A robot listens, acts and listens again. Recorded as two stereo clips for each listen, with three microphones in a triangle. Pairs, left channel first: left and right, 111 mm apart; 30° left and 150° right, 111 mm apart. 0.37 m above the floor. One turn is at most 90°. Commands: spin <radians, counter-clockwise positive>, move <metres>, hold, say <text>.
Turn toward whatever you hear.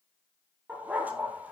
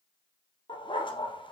spin -0.26
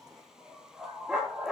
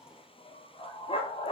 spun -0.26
say Found it: a dog barking, straight ahead.